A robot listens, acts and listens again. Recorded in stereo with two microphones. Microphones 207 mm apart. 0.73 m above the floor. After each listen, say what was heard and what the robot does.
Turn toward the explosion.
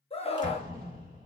The explosion: about 45° right or 135° right. Turn 45° right.
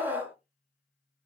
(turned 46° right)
Keep listening.
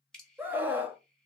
I heard an explosion, but can't make it out now. It was about straight ahead or 85° right.